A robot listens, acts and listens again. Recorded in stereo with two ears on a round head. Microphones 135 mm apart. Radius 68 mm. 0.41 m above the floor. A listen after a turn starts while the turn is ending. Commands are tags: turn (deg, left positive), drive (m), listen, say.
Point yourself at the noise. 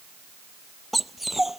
<turn deg="30"/>
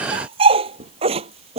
<turn deg="-35"/>
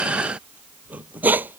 <turn deg="-10"/>
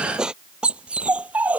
<turn deg="-10"/>
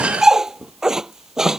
<say>Facing the dog barking.</say>